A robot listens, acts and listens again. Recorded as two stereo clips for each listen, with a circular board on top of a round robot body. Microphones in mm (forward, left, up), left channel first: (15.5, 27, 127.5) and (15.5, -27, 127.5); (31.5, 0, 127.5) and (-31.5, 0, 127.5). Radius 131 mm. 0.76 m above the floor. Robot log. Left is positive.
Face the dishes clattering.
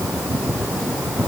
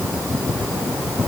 cmd idle
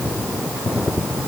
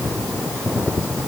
cmd idle
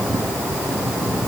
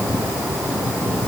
end: I can't make out dishes clattering.